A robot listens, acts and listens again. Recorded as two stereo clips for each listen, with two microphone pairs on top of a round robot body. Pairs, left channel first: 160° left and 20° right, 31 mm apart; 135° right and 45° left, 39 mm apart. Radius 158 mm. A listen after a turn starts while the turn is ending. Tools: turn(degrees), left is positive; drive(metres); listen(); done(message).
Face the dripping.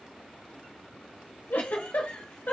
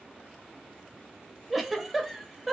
listen()
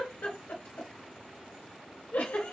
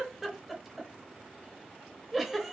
listen()
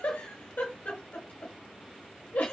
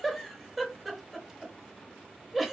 done("I can't make out dripping, only a giggle.")